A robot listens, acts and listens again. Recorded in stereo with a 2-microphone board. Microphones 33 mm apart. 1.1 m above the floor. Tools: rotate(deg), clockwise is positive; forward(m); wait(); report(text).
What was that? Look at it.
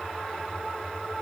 wait()
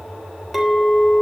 rotate(-30)
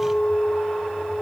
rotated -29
rotate(-150)
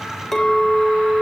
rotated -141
rotate(-10)
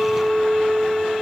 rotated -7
report("Facing the clink, 2 to 4 m away.")